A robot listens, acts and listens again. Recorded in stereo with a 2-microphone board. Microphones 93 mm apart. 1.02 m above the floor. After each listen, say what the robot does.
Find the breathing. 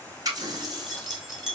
Keep listening.
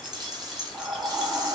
Turn 35° right.
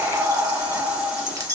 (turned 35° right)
Turn 110° right.
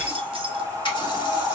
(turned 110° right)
Turn 40° right.
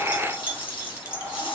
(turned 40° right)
Keep listening.
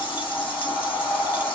Turn 15° left.
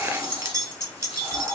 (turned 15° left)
Keep listening.
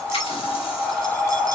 Found it: breathing, straight ahead.